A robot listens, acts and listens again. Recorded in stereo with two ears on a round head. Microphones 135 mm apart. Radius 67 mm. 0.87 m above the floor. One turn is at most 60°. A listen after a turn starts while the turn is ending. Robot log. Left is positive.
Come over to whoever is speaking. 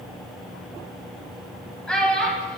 cmd yaw +30
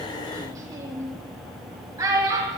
note: So it is at 25° right.
cmd yaw -25
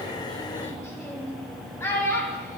note: The child speaking is now 20° left.
cmd yaw +20
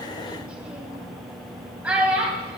note: The child speaking is now 10° right.
cmd yaw -10
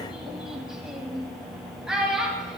cmd fwd 1.0
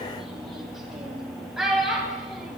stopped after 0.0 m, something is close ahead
end: Blocked. The child speaking is further on, straight ahead.